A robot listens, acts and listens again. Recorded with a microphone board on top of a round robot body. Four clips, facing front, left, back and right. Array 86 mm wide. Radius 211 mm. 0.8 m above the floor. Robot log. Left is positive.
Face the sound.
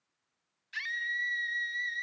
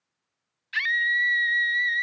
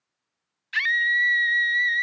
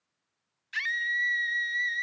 note: The scream: 160° left.
cmd yaw +160
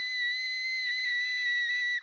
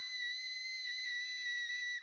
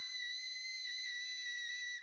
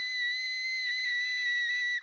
note: The scream is now 35° right.
cmd yaw -35
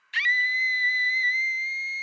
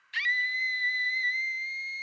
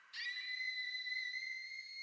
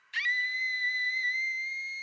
end: Facing the scream, under 1 m away.